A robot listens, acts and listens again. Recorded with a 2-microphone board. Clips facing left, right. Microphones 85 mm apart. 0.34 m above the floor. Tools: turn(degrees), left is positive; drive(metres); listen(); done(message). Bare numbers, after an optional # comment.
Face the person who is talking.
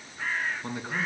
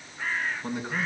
turn(30)
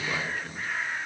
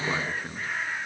# So it is at 25° right.
turn(-25)
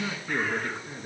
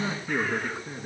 # The man speaking is now 10° right.
turn(-10)
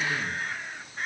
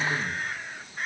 listen()
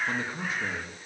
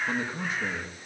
done("Facing the man speaking, over 4 m away.")